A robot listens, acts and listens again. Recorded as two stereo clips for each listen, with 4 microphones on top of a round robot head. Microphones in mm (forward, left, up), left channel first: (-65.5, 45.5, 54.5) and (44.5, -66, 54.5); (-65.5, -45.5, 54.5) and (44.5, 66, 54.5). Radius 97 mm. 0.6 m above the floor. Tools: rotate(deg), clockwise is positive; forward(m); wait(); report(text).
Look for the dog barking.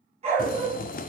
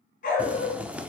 rotate(95)
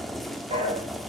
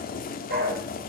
rotate(-15)
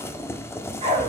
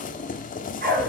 rotate(-10)
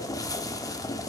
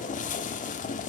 wait()
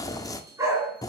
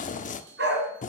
rotate(-30)
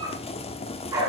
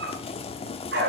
rotate(-25)
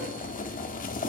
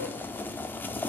wait()
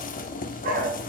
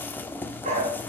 report("Facing the dog barking, 2 to 4 m away.")